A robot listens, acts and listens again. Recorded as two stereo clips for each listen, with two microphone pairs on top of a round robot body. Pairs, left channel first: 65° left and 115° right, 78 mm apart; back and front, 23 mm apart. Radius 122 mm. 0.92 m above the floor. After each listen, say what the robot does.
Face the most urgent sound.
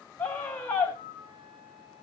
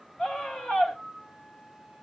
Turn 135° left.
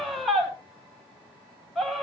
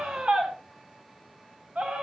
Turn 25° right.
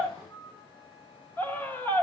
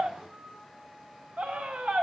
Facing the scream, over 4 m away.